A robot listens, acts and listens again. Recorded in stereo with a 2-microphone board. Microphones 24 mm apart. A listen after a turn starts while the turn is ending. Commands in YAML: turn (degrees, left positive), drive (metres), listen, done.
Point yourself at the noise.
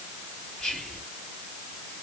turn: 20
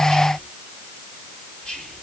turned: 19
turn: 145
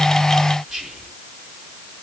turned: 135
done: "Found it: whispering, straight ahead, 2 to 4 m away."